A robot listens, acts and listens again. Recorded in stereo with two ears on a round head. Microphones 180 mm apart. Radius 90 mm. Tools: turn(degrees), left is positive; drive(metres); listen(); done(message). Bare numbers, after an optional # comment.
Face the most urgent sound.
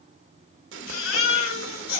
# The baby crying: about 75° left or 105° left.
turn(75)
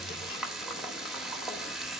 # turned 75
listen()
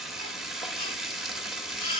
# So it is at 30° left.
turn(30)
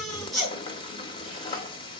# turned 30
done("Found it: a baby crying, straight ahead, over 4 m away.")